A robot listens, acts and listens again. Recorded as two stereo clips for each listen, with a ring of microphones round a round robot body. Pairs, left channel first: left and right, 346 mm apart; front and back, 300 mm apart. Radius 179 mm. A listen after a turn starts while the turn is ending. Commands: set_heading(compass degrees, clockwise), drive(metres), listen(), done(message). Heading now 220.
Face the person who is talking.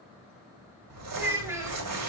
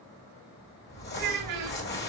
set_heading(30)
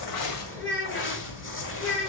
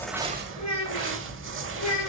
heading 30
set_heading(355)
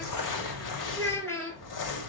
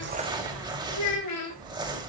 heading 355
set_heading(345)
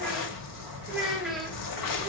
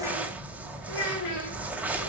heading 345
done("Facing the child speaking.")